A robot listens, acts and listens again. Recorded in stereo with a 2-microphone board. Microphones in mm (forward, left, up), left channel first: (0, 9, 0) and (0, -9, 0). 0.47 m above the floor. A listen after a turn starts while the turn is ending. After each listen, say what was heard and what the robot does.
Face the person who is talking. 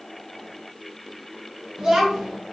The child speaking: about 40° right or 140° right. Turn 40° right.
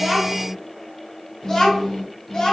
So it is at 40° left. Turn 40° left.
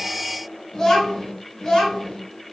The child speaking is now 30° left. Turn 30° left.
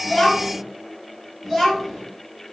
The child speaking is now 10° right. Turn 10° right.
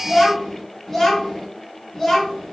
Facing the child speaking, 1 to 2 m away.